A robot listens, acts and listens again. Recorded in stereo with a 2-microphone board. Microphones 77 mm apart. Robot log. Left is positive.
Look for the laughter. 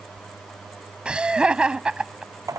cmd yaw -30
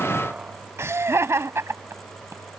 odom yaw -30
note: So it is at 135° right.
cmd yaw -135
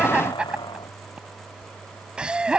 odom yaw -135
note: The laughter is now 15° right.
cmd yaw -15
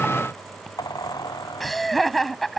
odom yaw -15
end: Facing the laughter.